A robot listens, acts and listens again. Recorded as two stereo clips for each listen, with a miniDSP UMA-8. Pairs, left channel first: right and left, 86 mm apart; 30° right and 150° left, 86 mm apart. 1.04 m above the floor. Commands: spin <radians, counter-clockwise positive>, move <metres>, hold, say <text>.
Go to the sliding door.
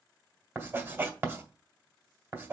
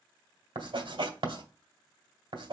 hold
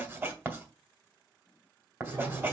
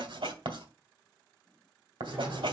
spin 1.31
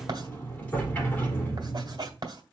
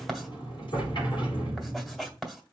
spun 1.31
spin -0.35
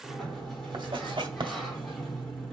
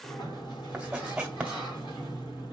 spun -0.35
move 1.0
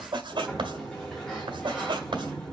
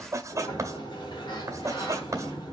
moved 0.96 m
move 1.0
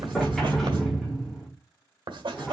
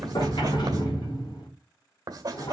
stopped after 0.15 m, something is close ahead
say Blocked. The sliding door is further on, straight ahead.